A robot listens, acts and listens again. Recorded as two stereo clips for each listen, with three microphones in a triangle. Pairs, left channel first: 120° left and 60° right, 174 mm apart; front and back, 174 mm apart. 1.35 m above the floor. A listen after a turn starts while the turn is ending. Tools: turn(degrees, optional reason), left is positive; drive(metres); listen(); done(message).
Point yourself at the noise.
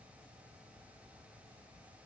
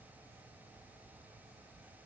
listen()
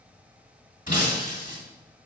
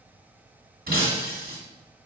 turn(degrees=155, reason="The breaking glass: 155° left.")
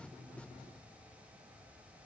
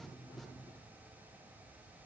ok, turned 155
done("I heard breaking glass from this way, but can't make it out now.")